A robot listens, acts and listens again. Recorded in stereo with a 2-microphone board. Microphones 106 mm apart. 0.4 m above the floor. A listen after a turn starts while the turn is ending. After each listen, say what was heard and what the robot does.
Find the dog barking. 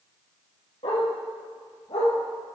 The dog barking: about 70° left or 110° left. Turn 70° left.
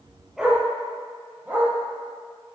So it is at 20° right. Turn 20° right.
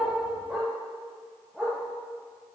The dog barking is now 10° right. Turn 10° right.
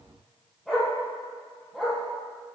Facing the dog barking.